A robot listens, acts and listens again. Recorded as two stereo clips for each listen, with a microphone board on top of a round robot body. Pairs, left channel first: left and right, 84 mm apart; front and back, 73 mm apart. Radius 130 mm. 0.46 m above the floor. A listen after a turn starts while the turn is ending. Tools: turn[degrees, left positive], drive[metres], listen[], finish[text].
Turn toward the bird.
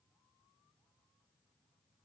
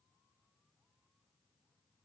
Action: listen[]
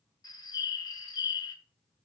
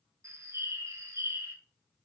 Thought: The bird: 125° left.
Action: turn[125]
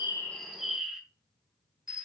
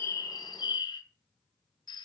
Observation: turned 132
Action: finish[Found it: a bird, straight ahead, 1 to 2 m away.]